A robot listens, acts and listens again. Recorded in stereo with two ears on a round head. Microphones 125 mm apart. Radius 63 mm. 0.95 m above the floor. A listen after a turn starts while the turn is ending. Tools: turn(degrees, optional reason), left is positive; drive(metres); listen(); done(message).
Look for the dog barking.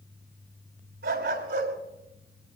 turn(degrees=-90)
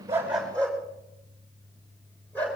turn(degrees=10, reason="So it is at 10° left.")
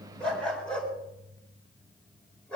done("Found it: a dog barking, straight ahead, over 4 m away.")